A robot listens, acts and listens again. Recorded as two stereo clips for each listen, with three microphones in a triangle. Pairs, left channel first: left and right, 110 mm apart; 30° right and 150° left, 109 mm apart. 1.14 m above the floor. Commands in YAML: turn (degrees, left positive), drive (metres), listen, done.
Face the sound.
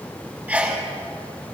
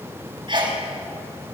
turn: -165
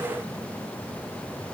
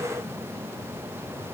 done: "I heard a sneeze from this way, but can't make it out now."